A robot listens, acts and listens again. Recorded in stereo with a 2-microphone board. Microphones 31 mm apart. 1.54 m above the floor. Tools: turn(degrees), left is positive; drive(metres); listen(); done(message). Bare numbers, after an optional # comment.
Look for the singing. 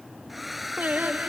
# The singing: about 70° right or 110° right.
turn(-70)
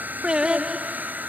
# So it is at 25° right.
turn(-25)
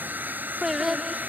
# The singing is now 10° right.
turn(-10)
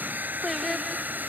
done("Facing the singing.")